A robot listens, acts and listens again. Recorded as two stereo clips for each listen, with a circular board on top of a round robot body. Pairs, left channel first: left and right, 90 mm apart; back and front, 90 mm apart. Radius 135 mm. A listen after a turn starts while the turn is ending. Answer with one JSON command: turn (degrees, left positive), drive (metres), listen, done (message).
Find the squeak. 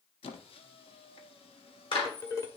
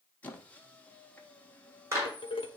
{"turn": 105}
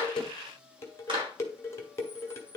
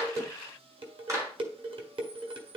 {"turn": -10}
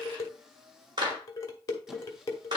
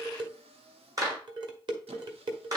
{"done": "Found it: a squeak, straight ahead, under 1 m away."}